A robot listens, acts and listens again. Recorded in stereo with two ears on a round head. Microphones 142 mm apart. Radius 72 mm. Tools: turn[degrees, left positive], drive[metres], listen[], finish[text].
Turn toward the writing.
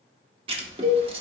Thought: The writing: about 35° right or 145° right.
Action: turn[-35]
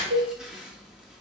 Action: listen[]
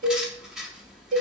Action: finish[Found it: writing, straight ahead, under 1 m away.]